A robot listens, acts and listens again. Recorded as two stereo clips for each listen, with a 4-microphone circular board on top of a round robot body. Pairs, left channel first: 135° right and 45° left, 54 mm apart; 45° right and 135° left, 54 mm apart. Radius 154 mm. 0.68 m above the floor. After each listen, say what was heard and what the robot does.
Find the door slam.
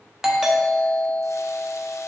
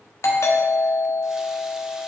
Keep listening.
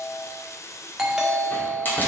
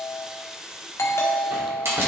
The door slam: 170° left. Turn 170° left.
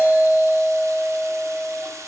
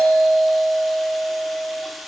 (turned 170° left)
Facing where the door slam came from. I can't hear it now.